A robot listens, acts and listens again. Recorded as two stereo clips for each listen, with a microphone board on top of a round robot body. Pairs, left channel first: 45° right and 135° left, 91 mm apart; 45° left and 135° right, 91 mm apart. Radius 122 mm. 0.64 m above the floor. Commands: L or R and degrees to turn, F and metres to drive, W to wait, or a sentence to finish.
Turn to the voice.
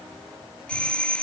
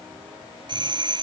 W
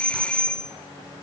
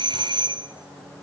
W
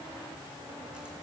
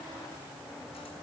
I can't make out anyone speaking to turn to.